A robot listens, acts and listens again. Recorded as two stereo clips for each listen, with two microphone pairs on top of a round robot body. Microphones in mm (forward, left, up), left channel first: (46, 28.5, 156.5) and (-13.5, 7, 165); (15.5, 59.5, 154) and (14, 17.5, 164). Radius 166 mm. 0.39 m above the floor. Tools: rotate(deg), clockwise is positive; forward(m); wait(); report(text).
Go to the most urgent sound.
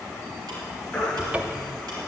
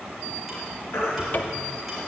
rotate(-100)
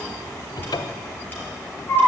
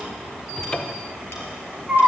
forward(1.0)
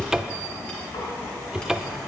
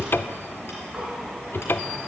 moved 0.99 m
wait()
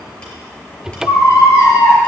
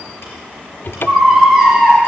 rotate(10)
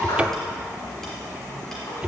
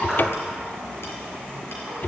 wait()
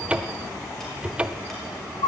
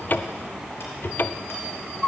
forward(1.0)
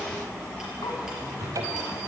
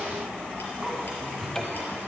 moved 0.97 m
wait()
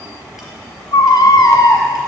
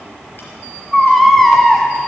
forward(1.0)
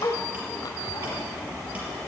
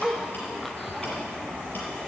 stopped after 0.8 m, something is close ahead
rotate(-10)
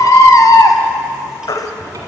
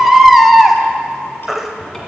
report("I am next to the baby crying.")